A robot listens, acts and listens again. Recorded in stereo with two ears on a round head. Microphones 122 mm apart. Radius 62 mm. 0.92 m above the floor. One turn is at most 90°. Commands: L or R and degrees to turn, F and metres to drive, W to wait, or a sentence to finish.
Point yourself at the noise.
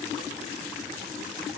W
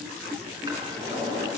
R30
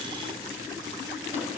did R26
W
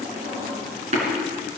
R90
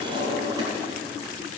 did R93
R30
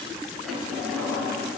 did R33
Facing the drawer.